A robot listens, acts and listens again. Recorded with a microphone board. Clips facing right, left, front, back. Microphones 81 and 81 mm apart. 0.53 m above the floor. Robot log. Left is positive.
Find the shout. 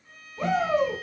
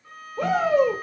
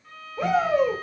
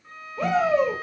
note: The shout: 70° left.
cmd yaw +70
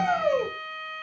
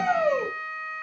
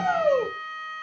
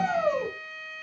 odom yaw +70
note: The shout is now 10° right.
cmd yaw -10
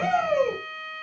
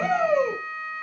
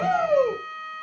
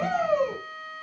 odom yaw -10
end: Found it: a shout, straight ahead, 1 to 2 m away.